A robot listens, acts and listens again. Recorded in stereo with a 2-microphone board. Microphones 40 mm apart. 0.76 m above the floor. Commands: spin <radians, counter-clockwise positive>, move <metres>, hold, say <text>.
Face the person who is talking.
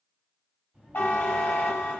spin -0.52
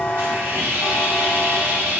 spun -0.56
hold
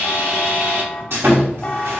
hold
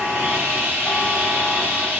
say I heard a child speaking, but can't make it out now. It was about straight ahead or 115° right.